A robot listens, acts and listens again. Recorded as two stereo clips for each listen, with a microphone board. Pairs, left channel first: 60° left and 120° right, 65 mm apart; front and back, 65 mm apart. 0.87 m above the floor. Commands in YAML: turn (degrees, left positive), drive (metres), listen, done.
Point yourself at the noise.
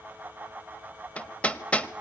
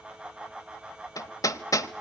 done: "Facing the hammering, 1 to 2 m away."